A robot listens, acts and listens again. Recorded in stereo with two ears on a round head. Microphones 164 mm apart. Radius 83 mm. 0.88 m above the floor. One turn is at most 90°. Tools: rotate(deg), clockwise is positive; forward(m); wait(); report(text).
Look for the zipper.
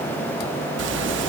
rotate(70)
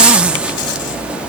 report("Facing the zipper, 1 to 2 m away.")